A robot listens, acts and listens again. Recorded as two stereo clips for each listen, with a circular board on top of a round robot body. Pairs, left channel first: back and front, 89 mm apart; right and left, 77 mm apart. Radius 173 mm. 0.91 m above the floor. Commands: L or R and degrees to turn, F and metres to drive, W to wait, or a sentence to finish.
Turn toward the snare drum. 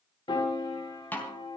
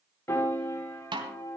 L110
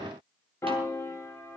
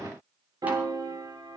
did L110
W
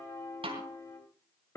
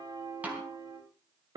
L15
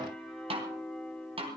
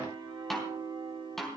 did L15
Facing the snare drum.